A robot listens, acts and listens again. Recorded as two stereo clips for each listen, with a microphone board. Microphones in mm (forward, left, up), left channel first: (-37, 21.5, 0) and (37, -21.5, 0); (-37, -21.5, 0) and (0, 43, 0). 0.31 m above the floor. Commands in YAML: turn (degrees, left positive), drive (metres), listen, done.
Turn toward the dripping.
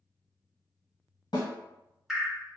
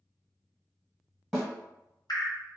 turn: -120
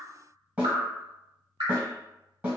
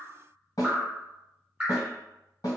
turn: -15
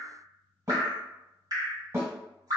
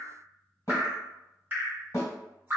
done: "Facing the dripping, 1 to 2 m away."